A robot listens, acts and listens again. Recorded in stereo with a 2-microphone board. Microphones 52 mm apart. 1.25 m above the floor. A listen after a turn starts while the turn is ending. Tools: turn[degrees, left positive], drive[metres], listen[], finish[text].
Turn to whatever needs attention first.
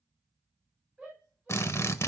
Action: turn[-30]
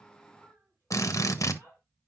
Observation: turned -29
Thought: So it is at 140° right.
Action: turn[-140]
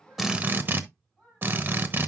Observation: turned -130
Thought: The shout is now 10° right.
Action: turn[-10]
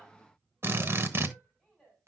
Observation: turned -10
Action: finish[Facing the shout.]